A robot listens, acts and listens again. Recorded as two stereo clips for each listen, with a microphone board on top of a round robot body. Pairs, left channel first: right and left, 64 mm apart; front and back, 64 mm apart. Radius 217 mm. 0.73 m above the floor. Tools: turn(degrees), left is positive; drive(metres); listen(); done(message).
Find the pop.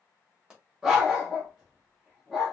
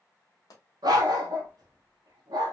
turn(degrees=10)
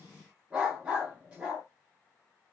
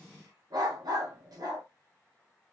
done("I heard a pop from this way, but can't make it out now.")